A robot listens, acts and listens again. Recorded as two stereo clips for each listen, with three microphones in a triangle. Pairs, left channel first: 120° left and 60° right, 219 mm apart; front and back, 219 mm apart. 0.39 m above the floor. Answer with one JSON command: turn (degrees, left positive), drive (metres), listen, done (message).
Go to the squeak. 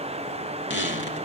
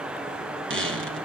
{"turn": 155}
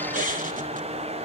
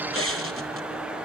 {"turn": -10}
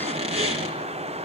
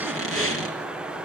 {"drive": 1.0}
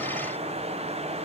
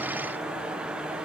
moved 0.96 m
{"listen": true}
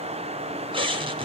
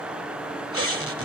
{"drive": 1.0}
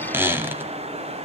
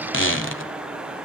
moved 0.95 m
{"turn": 20}
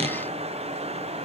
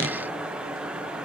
{"drive": 1.0}
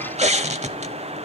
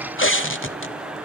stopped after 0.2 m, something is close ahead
{"done": "Arrived at the squeak, straight ahead."}